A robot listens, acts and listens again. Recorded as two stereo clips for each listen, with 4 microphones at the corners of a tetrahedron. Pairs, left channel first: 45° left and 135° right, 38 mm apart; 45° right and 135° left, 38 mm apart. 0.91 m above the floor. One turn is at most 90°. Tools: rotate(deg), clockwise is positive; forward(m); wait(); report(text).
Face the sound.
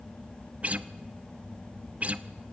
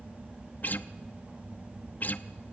rotate(85)
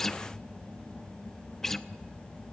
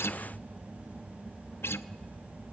rotate(40)
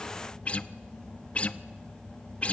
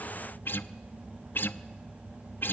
rotate(15)
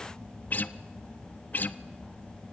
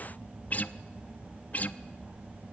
report("Facing the guitar, under 1 m away.")